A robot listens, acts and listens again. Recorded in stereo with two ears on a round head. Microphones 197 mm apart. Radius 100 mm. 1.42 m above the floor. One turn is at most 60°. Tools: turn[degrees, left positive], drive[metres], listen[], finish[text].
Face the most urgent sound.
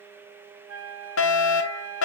Thought: The fire alarm: about 60° left or 120° left.
Action: turn[60]
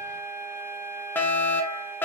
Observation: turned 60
Thought: So it is at 10° left.
Action: turn[10]
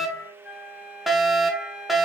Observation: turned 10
Action: finish[Found it: a fire alarm, straight ahead, 1 to 2 m away.]